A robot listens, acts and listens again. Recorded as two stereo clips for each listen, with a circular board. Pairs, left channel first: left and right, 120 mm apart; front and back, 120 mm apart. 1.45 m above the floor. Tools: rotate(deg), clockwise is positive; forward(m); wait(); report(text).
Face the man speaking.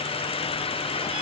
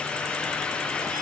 wait()
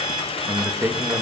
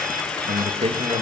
rotate(155)
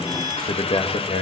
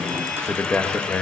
rotate(-80)
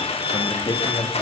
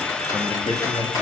rotate(-35)
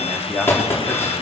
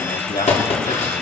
report("Found it: a man speaking, straight ahead.")